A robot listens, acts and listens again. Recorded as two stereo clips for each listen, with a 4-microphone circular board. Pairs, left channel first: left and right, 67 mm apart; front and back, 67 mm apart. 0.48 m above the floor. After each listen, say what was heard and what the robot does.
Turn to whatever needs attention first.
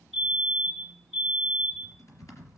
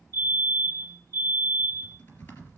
The fire alarm: straight behind. Turn 180° left.
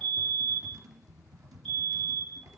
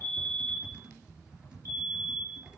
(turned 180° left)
The fire alarm is now 10° left. Turn 10° left.
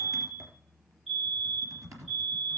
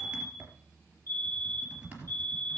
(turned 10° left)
Facing the fire alarm.